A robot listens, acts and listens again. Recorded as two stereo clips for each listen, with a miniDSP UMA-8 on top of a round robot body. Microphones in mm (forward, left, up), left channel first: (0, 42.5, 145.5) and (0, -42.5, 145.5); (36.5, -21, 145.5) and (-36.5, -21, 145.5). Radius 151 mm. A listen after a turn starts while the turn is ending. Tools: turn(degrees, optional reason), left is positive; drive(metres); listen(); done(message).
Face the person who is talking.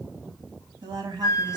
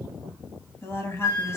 turn(degrees=-55, reason="The woman speaking: 55° right.")
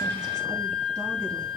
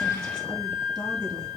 listen()
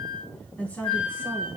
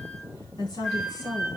turn(degrees=20, reason="The woman speaking is now 20° left.")
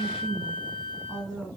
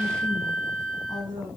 turn(degrees=10, reason="The woman speaking is now 10° left.")
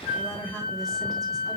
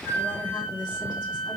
listen()
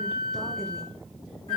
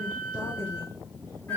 listen()
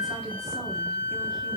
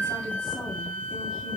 done("I heard a woman speaking from this way, but can't make it out now.")